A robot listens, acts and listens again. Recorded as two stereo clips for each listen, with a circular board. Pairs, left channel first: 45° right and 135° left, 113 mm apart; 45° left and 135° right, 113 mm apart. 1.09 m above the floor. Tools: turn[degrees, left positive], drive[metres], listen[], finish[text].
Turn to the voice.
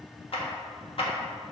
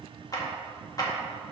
Action: listen[]
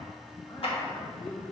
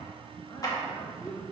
Thought: The man speaking: 10° right.
Action: turn[-10]
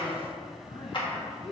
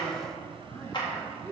Thought: The man speaking is now 25° right.
Action: turn[-25]
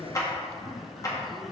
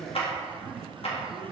Thought: The man speaking is now 35° right.
Action: turn[-35]
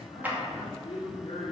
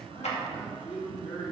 Thought: The man speaking is now 10° left.
Action: turn[10]
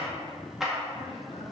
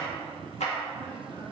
Action: finish[Found it: a man speaking, straight ahead.]